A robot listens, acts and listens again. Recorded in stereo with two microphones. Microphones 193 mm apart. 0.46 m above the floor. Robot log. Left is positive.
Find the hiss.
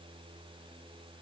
cmd idle
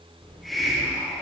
cmd yaw +30
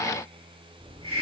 note: So it is at 30° right.
cmd yaw -30
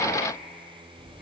cmd idle
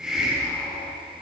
end: Found it: a hiss, straight ahead, 2 to 4 m away.